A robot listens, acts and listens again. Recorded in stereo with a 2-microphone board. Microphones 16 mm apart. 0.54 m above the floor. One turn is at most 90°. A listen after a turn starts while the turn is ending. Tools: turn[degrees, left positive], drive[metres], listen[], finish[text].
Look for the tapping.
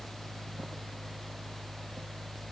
Action: listen[]
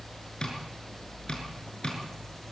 Thought: The tapping: about 50° left or 130° left.
Action: turn[50]
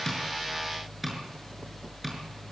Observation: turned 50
Action: finish[Found it: tapping, straight ahead, over 4 m away.]